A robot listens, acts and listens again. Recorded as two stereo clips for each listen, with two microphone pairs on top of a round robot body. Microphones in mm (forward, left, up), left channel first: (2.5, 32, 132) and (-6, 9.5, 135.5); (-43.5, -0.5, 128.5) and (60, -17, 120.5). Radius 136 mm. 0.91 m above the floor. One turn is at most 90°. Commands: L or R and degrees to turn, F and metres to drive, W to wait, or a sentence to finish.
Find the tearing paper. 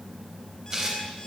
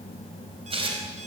R45
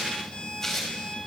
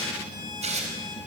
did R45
Facing the tearing paper.